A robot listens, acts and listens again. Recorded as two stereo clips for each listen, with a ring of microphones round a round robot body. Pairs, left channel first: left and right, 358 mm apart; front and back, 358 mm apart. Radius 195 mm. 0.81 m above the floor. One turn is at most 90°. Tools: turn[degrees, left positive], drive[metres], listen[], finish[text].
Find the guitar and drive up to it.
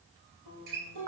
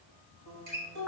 Thought: The guitar: 140° right.
Action: turn[-90]
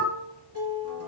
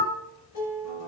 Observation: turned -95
Thought: The guitar is now 40° right.
Action: turn[-40]
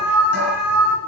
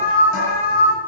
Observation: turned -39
Action: listen[]
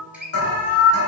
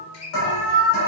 Action: drive[1.0]
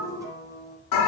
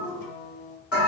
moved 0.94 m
Thought: The guitar is now 10° right.
Action: turn[-10]
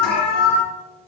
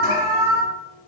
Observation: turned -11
Action: listen[]
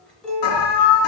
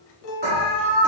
Action: drive[1.0]
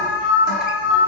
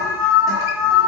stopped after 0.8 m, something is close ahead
Action: listen[]
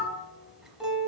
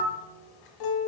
Action: finish[I am next to the guitar.]